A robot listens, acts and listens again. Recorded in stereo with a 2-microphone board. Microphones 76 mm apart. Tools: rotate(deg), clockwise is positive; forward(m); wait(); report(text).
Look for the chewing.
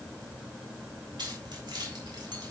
wait()
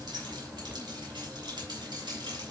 wait()
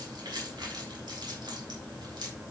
report("I can't make out chewing to turn to.")